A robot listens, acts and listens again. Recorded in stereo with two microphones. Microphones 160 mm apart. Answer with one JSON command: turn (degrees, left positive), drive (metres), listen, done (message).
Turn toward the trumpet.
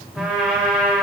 {"turn": -30}
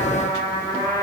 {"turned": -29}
{"turn": 25}
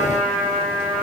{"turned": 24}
{"done": "Facing the trumpet, 2 to 4 m away."}